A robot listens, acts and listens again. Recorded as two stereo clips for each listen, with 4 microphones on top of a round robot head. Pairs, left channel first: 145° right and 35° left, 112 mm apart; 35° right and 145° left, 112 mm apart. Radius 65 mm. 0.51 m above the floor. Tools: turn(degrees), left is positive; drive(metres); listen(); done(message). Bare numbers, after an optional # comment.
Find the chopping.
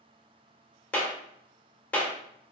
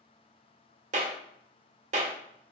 listen()
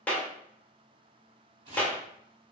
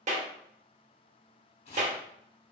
done("Facing the chopping.")